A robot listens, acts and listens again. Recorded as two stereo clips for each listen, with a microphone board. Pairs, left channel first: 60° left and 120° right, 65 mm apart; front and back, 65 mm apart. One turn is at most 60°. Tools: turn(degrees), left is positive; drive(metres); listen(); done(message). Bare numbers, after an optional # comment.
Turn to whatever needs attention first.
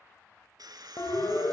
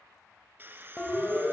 # The siren: 75° left.
turn(60)
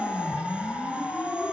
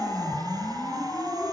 done("Facing the siren.")